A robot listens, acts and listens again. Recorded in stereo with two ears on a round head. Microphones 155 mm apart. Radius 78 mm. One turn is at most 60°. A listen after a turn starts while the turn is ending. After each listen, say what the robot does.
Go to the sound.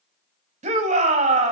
Turn 40° right.
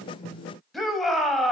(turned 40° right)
Drive 1.0 m forward.
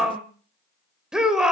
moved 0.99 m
Drive 1.0 m forward.
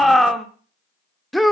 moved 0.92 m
Drive 1.0 m forward.
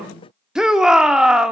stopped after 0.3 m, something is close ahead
I am next to the shout.